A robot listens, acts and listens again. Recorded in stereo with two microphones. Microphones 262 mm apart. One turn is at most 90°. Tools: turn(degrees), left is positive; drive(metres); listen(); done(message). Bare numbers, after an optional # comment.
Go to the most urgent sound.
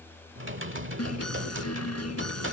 # The alarm: about 70° left or 110° left.
turn(70)
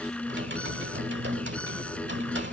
drive(1.0)
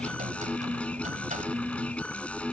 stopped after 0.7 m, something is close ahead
done("Blocked. The alarm is further on, straight ahead.")